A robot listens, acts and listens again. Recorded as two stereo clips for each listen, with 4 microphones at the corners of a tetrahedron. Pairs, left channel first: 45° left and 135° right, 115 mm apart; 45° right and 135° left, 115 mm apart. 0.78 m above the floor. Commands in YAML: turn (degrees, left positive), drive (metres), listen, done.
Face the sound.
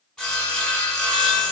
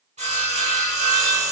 turn: 130
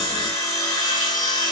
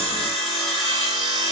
turn: -10
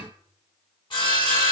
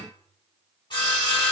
done: "Found it: sawing, straight ahead, under 1 m away."